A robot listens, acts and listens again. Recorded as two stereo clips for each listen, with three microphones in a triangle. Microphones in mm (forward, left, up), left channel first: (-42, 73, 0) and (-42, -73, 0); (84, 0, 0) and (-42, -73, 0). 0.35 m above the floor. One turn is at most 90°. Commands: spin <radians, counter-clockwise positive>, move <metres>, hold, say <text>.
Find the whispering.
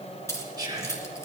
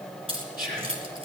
spin -1.57
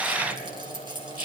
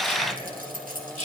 spin -1.05
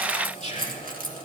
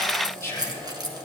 spin -0.70
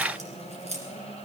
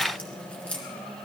hold
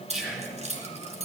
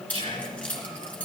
say Found it: whispering, straight ahead.